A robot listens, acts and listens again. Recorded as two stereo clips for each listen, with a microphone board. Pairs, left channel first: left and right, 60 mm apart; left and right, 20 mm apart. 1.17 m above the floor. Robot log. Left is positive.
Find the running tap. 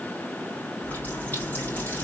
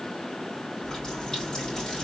note: The running tap: about 30° left or 150° left.
cmd yaw +30
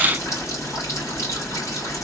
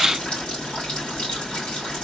note: So it is at 120° left.
cmd yaw +120
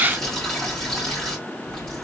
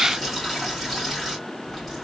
note: The running tap is now 10° left.
cmd yaw +10
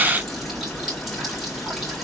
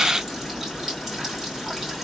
end: Found it: a running tap, straight ahead, 2 to 4 m away.